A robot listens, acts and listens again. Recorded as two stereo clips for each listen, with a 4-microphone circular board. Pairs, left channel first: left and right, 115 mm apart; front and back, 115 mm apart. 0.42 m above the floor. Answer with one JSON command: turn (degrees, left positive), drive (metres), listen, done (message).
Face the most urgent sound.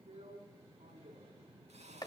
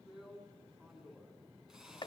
{"listen": true}
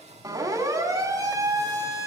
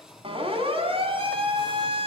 {"turn": -145}
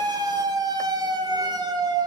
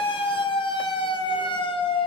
{"turn": -40}
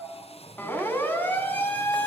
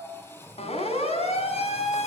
{"turn": 15}
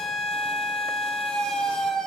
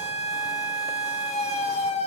{"done": "Facing the siren, over 4 m away."}